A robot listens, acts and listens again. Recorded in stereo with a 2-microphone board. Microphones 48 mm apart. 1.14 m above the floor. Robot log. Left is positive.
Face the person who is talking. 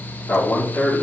note: The man speaking: about 45° left or 135° left.
cmd yaw +45
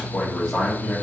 note: So it is at 15° left.
cmd yaw +15
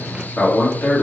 note: The man speaking is now 15° left.
cmd yaw +15
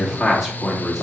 note: The man speaking is now 10° left.
cmd yaw +10
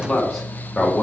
note: The man speaking is now 10° left.
cmd yaw +10
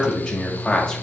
note: The man speaking is now 10° left.
cmd yaw +10
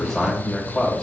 end: Facing the man speaking, 2 to 4 m away.